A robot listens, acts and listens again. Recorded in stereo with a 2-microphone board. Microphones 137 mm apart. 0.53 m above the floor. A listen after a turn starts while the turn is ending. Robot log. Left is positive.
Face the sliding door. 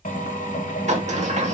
note: The sliding door: about 55° right or 125° right.
cmd yaw -55
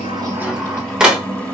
end: Found it: a sliding door, straight ahead, 1 to 2 m away.